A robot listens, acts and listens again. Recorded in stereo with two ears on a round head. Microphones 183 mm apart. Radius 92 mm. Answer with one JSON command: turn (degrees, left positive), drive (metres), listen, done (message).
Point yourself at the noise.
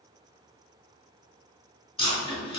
{"turn": 25}
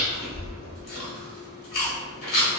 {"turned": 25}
{"turn": 130}
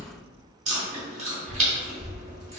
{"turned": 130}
{"turn": -35}
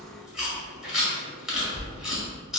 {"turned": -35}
{"done": "Facing the chewing."}